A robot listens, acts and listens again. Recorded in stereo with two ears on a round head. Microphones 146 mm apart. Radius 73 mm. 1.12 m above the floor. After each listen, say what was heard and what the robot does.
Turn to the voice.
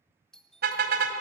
Keep listening.
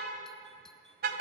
Keep listening.
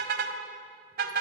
I can't make out anyone speaking to turn to.